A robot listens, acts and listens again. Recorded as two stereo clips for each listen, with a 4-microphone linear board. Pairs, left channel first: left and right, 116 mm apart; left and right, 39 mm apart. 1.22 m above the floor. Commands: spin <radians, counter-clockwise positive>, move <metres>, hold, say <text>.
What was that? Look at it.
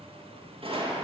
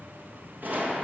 spin -0.96
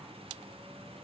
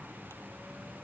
hold
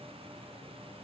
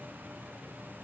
say I heard a gunshot, but can't make it out now. It was about straight ahead or 70° right.